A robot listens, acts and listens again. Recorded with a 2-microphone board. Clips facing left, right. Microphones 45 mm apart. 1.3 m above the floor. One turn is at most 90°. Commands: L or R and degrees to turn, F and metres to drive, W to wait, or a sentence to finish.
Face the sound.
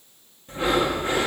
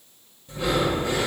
L40
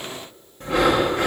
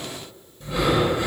L90
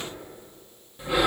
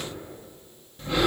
L10
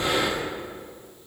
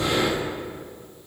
Found it: breathing, straight ahead.